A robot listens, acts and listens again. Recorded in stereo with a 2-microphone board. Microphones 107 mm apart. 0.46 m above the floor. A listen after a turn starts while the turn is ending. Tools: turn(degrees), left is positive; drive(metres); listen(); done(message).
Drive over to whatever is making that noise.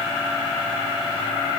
listen()
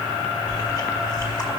turn(degrees=35)
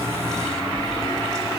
drive(metres=1.0)
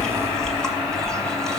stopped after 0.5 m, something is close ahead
done("Blocked. The chewing is further on, straight ahead.")